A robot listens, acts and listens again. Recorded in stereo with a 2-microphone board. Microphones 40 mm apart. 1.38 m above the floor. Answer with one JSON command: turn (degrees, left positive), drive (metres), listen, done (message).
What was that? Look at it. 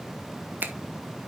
{"turn": -50}
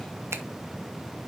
{"listen": true}
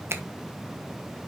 {"turn": -80}
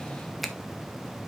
{"listen": true}
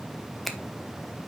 {"done": "Found it: a finger snap, straight ahead."}